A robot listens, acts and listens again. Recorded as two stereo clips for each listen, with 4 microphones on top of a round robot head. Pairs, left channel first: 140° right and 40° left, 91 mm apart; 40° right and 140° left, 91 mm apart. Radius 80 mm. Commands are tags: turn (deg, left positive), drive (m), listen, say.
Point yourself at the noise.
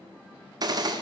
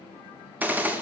<turn deg="70"/>
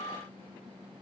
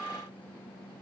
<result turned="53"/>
<turn deg="20"/>
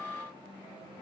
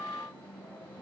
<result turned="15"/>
<say>I heard a gunshot from this way, but can't make it out now.</say>